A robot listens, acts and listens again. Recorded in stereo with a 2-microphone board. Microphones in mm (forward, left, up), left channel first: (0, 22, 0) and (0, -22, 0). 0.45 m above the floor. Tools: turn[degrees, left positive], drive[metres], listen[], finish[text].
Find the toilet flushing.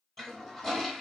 Action: turn[30]
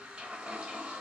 Thought: So it is at 25° right.
Action: turn[-25]
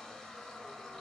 Thought: The toilet flushing is now 10° left.
Action: turn[10]
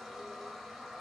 Action: finish[Found it: a toilet flushing, straight ahead.]